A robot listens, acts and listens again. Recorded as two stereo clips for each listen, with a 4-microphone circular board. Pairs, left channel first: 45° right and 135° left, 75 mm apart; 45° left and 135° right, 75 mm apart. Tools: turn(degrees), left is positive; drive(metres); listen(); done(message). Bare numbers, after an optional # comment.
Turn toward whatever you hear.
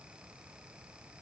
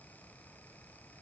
listen()
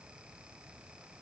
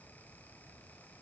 listen()
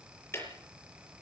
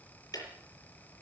# The ticking: 10° left.
turn(10)
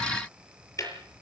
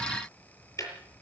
done("Facing the ticking, over 4 m away.")